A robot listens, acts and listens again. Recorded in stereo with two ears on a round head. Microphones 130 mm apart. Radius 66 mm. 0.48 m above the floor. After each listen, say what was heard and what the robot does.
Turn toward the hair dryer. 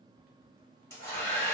The hair dryer: about 20° left or 160° left. Turn 20° left.
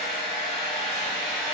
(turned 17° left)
Facing the hair dryer.